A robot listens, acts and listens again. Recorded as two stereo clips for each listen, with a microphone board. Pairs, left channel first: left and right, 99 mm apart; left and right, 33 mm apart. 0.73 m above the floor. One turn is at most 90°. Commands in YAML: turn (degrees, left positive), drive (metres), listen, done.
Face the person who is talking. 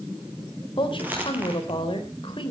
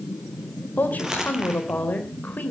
turn: 60
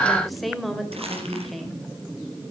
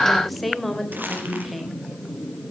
done: "Facing the woman speaking, 2 to 4 m away."